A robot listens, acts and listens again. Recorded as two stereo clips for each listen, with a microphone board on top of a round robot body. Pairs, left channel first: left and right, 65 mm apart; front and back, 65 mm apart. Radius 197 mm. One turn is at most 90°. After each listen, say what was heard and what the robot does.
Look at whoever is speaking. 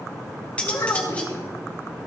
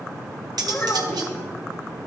The child speaking: 65° left. Turn 65° left.
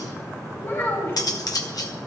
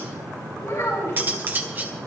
The child speaking is now 40° left. Turn 40° left.
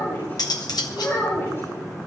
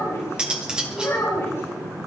The child speaking is now 40° left. Turn 40° left.
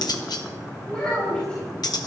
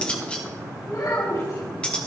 The child speaking is now 15° left. Turn 15° left.
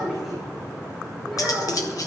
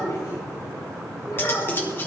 Found it: a child speaking, straight ahead.